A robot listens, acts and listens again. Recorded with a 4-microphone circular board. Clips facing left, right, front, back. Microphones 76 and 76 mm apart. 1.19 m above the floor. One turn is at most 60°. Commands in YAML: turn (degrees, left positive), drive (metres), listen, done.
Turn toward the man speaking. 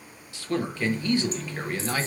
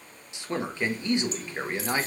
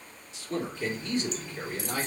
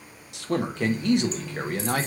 turn: -60
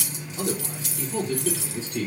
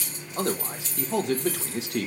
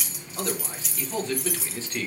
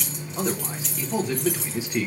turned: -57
turn: -60
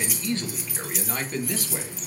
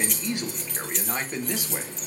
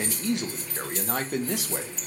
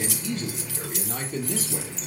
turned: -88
turn: -15
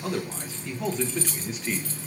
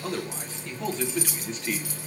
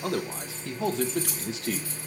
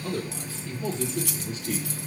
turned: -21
done: "Found it: a man speaking, straight ahead."